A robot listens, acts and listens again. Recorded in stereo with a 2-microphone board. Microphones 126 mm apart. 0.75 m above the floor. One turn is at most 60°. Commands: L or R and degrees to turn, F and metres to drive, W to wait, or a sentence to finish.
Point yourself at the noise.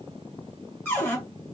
L20
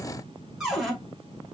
Facing the cupboard door.